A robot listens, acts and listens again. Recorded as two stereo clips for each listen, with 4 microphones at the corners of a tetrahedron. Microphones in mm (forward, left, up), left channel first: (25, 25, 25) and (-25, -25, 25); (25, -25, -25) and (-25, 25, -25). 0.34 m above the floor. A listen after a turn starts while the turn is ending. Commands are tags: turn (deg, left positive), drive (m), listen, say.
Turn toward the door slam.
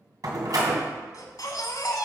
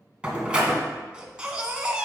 <turn deg="-150"/>
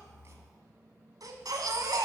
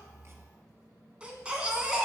<say>I heard a door slam from this way, but can't make it out now.</say>